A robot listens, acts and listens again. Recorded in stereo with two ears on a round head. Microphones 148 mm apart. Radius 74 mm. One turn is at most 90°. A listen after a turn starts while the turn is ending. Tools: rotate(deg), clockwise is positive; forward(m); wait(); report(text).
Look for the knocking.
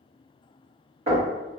rotate(40)
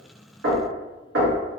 rotate(90)
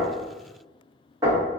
rotate(20)
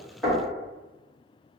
report("Facing the knocking, 1 to 2 m away.")